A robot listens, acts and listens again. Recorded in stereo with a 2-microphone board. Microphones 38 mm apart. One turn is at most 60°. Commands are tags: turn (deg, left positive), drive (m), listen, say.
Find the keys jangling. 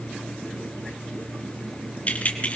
<turn deg="40"/>
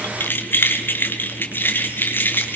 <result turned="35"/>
<turn deg="60"/>
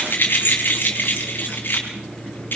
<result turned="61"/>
<turn deg="60"/>
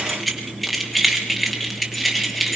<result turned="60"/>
<say>Found it: keys jangling, straight ahead.</say>